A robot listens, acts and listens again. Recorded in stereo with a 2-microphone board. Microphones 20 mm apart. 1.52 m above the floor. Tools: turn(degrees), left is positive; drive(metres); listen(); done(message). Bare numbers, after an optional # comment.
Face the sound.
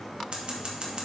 # The scissors: about 55° right or 125° right.
turn(-55)
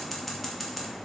done("Facing the scissors, 2 to 4 m away.")